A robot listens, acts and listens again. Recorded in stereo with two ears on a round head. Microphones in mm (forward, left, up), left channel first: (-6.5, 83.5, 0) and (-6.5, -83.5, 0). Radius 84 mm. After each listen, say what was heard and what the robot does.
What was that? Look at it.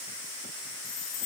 The chime: about 60° left or 120° left. Turn 60° left.
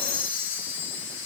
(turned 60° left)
So it is at 50° left. Turn 50° left.
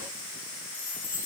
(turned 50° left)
The chime is now 10° left. Turn 10° left.
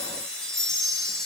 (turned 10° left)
Found it: a chime, straight ahead.